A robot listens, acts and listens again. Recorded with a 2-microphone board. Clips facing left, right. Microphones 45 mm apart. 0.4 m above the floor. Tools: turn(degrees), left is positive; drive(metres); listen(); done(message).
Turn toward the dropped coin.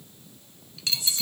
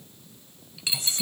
turn(degrees=-15)
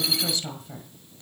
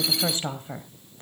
listen()
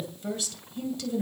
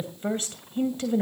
done("I heard a dropped coin, but can't make it out now. It was about straight ahead or 150° right.")